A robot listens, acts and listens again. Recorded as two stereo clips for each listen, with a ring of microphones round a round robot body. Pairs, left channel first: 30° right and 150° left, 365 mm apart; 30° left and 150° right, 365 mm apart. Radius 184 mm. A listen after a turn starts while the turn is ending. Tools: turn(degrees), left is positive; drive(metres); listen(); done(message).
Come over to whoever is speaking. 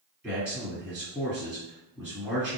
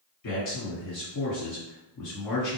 turn(degrees=65)
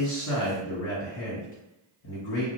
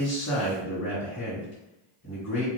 turn(degrees=-20)
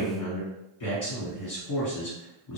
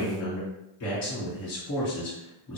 drive(metres=1.0)
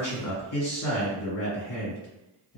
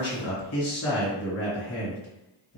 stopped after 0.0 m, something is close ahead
done("Blocked. The man speaking is further on, straight ahead.")